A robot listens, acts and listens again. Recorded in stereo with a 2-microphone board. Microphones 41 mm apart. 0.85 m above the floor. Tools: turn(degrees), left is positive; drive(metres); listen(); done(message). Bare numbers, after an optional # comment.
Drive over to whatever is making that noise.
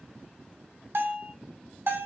# The bell: about 70° right or 110° right.
turn(-70)
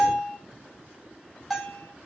drive(1.0)
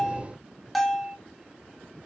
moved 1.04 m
drive(1.0)
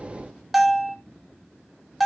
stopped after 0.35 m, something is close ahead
done("Arrived at the bell, straight ahead.")